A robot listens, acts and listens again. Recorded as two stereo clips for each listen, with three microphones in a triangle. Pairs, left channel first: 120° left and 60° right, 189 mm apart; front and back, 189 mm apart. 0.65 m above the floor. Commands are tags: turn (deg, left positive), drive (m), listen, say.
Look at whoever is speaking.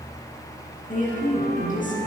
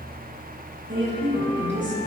<turn deg="165"/>
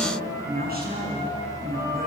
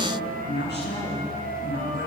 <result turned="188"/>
<turn deg="-25"/>
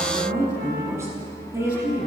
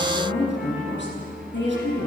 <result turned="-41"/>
<turn deg="15"/>
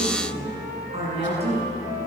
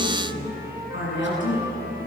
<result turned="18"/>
<say>Facing the woman speaking.</say>